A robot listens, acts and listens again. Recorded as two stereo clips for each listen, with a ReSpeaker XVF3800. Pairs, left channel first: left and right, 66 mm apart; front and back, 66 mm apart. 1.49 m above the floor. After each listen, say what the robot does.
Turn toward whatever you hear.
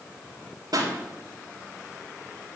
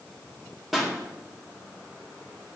Turn 90° right.
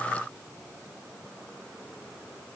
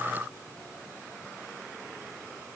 Facing where the pop came from. I can't hear it now.